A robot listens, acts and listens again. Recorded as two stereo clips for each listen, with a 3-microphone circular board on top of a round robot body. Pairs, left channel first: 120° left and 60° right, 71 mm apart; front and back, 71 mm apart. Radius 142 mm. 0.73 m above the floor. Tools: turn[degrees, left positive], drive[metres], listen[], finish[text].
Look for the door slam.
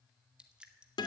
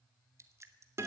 Action: listen[]
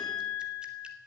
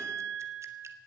Action: listen[]
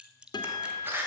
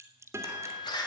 Action: finish[Found it: a door slam, straight ahead, 2 to 4 m away.]